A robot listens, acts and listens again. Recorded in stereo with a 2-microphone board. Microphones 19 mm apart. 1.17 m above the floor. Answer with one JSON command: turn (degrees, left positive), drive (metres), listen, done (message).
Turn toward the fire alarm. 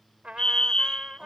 {"turn": 50}
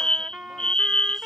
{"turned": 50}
{"turn": 70}
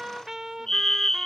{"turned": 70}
{"turn": 25}
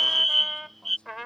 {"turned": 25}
{"done": "Found it: a fire alarm, straight ahead."}